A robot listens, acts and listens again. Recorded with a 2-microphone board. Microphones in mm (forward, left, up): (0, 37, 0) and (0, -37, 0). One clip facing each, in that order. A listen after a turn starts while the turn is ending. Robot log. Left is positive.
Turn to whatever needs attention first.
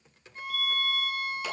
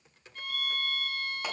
note: The fire alarm: about 50° right or 130° right.
cmd yaw -50
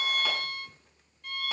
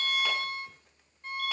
note: So it is at 75° right.
cmd yaw -75
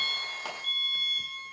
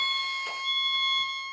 note: The fire alarm is now 10° right.
cmd yaw -10
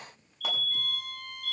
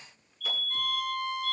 end: Facing the fire alarm, 2 to 4 m away.